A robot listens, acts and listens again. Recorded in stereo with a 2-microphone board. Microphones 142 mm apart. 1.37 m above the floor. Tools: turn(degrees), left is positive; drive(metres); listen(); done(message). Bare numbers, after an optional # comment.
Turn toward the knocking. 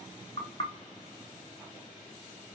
# The knocking: about 40° left or 140° left.
turn(40)
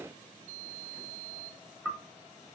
done("Facing the knocking.")